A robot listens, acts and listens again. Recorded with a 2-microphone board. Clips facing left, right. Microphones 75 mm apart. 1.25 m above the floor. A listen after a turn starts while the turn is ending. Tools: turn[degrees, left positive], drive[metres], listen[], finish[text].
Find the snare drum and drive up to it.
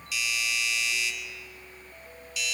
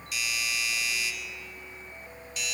Action: listen[]
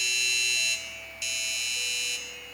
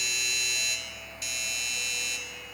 Action: listen[]
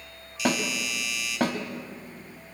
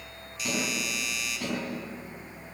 Thought: The snare drum: about 70° left or 110° left.
Action: turn[70]
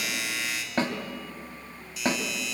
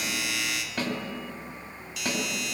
Thought: So it is at 35° left.
Action: turn[35]
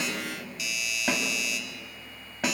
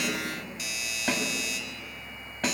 Thought: The snare drum is now 10° left.
Action: turn[10]
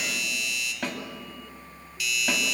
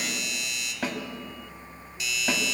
Action: drive[1.0]
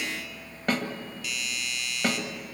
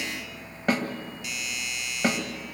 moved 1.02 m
Action: drive[1.0]
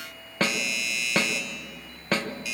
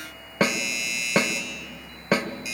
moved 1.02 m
Thought: The snare drum is now 15° right.
Action: turn[-15]
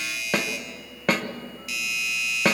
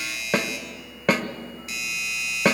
Action: drive[1.0]
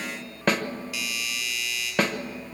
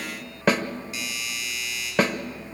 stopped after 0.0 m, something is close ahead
Action: finish[I am next to the snare drum.]